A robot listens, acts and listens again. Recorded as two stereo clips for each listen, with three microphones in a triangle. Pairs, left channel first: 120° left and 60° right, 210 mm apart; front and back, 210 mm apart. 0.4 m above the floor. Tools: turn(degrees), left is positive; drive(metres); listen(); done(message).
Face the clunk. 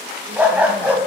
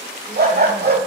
listen()
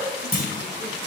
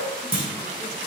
turn(degrees=150)
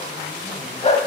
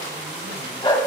done("I heard a clunk from this way, but can't make it out now.")